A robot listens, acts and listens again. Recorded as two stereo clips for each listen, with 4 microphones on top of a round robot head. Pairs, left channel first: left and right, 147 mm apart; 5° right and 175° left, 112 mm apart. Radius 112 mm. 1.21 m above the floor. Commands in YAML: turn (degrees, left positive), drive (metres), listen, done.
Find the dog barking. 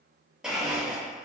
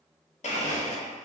listen: true
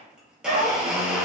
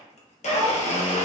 turn: -105
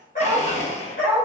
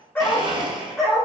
turn: 80
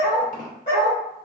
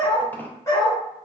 turn: 50
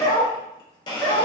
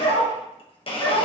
turn: 30
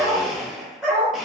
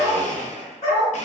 done: "Facing the dog barking."